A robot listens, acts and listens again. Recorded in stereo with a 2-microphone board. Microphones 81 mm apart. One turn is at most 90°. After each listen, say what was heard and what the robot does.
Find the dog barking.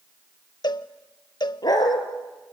The dog barking: about 55° left or 125° left. Turn 55° left.
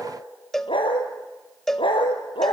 So it is at 85° left. Turn 85° left.
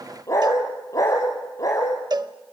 The dog barking is now 40° left. Turn 40° left.
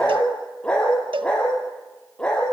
The dog barking is now 10° left. Turn 10° left.
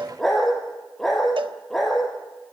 Facing the dog barking, over 4 m away.